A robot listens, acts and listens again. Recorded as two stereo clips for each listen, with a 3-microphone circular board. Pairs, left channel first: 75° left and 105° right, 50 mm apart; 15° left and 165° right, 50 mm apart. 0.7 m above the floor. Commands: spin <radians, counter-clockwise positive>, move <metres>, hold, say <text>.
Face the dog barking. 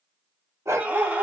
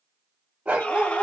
spin -1.83
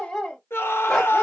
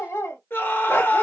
say Facing the dog barking, 1 to 2 m away.